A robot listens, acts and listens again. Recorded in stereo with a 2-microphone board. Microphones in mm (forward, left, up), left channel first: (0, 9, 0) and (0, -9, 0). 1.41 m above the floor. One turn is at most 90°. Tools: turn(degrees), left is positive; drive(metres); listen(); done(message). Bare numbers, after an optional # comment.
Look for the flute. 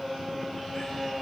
listen()
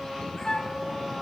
# The flute: about 45° left or 135° left.
turn(45)
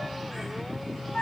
# So it is at 85° left.
turn(85)
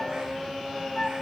# The flute is now 40° left.
turn(40)
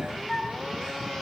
# The flute is now 15° left.
turn(15)
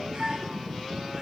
done("Facing the flute.")